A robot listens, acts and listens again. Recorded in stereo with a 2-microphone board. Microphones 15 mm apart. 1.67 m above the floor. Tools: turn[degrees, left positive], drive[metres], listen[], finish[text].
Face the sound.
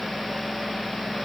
Action: listen[]
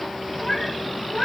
Thought: The cat meowing: about 25° left or 155° left.
Action: turn[25]
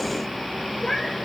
Action: finish[Facing the cat meowing, 2 to 4 m away.]